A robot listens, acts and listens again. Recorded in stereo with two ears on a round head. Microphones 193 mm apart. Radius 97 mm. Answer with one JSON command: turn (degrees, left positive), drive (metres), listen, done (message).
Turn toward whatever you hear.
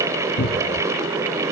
{"turn": 60}
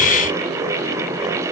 {"listen": true}
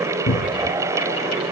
{"turn": 60}
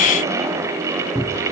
{"done": "Found it: a cupboard door, straight ahead."}